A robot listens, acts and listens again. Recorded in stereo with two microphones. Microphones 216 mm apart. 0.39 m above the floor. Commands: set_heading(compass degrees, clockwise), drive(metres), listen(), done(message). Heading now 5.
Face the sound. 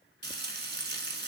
set_heading(55)
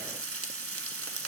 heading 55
set_heading(135)
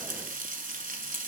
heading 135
set_heading(170)
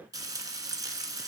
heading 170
set_heading(185)
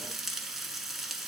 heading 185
done("Found it: frying, straight ahead.")